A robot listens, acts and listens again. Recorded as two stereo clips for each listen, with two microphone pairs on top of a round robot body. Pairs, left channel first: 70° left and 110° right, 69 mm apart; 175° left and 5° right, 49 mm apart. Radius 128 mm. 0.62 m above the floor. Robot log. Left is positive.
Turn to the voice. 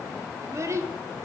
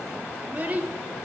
note: The child speaking: 65° right.
cmd yaw -65
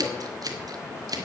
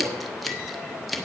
cmd idle
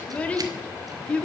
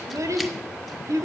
end: Found it: a child speaking, straight ahead.